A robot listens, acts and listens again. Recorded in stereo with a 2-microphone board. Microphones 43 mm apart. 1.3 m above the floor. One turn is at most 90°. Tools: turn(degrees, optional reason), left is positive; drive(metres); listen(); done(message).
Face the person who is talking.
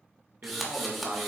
turn(degrees=-45, reason="The man speaking: about 45° right or 135° right.")
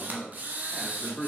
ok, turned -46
turn(degrees=15, reason="So it is at 15° left.")
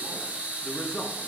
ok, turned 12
turn(degrees=20, reason="The man speaking is now 20° left.")
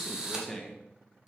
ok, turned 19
turn(degrees=15, reason="The man speaking is now 15° left.")
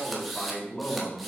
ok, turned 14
turn(degrees=30, reason="The man speaking is now 30° left.")
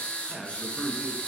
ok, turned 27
done("Found it: a man speaking, straight ahead, 1 to 2 m away.")